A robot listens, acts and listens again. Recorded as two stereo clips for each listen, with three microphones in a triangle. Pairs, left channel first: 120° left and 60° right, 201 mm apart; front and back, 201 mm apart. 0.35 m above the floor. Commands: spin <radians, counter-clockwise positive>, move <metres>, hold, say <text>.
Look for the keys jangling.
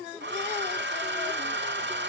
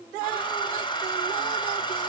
hold
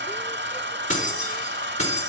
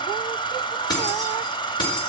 spin 1.13
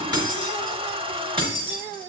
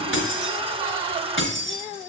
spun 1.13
say Facing the keys jangling.